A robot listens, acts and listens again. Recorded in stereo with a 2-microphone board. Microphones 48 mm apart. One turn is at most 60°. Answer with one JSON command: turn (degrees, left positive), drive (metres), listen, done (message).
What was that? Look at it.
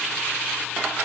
{"listen": true}
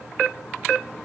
{"listen": true}
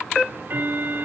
{"turn": -50}
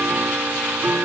{"turn": -60}
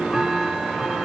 {"done": "Facing the ticking."}